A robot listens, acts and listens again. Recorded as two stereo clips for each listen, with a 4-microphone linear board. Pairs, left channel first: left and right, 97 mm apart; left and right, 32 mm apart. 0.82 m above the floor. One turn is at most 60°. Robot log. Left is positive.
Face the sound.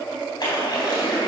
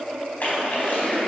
note: The splash: about 50° left or 130° left.
cmd yaw +50
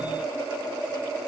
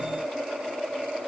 cmd idle
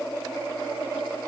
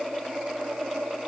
end: I heard a splash, but can't make it out now. It was about straight ahead or 80° left.